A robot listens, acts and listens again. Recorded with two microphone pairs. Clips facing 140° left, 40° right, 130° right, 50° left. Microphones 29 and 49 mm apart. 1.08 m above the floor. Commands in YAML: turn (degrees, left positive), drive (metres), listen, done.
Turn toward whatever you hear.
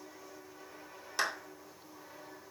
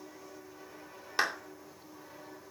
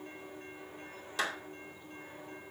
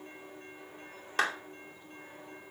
turn: 25
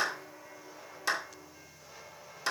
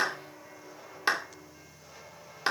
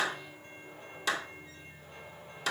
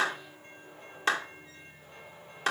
turn: 10
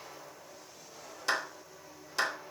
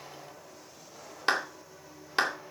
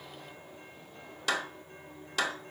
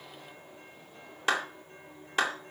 done: "Found it: a clap, straight ahead."